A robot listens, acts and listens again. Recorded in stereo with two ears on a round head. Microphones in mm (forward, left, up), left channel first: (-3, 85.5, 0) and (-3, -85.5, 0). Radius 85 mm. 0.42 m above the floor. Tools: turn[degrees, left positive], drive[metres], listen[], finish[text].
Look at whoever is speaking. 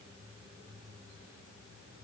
Action: listen[]
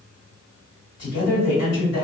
Thought: The man speaking: about 60° left or 120° left.
Action: turn[60]
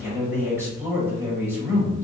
Thought: So it is at 15° left.
Action: turn[15]
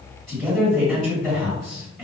Action: finish[Facing the man speaking.]